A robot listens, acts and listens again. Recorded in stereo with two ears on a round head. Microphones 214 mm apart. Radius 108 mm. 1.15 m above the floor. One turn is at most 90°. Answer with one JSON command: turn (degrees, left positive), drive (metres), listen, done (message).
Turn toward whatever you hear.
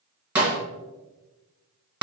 {"turn": -30}
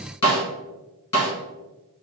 {"turn": 25}
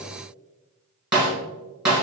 {"done": "Found it: a snare drum, straight ahead, 1 to 2 m away."}